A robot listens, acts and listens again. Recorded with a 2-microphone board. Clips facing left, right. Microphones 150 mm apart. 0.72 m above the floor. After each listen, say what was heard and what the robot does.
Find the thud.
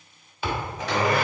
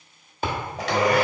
The thud: about 45° right or 135° right. Turn 45° right.
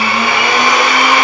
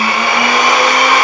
Keep listening.
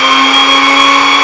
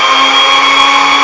I heard a thud, but can't make it out now. It was about straight ahead or 90° right.